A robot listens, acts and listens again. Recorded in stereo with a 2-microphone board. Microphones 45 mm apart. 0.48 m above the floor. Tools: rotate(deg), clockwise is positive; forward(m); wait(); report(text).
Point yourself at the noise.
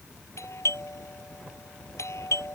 rotate(-90)
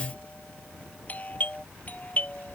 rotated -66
rotate(-35)
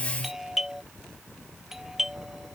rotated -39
report("Facing the doorbell.")